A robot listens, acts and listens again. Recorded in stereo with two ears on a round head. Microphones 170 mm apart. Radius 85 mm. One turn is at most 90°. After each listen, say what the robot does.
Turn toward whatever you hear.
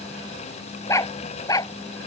Turn 20° left.
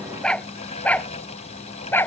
Turn 30° left.
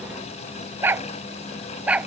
Facing the dog barking.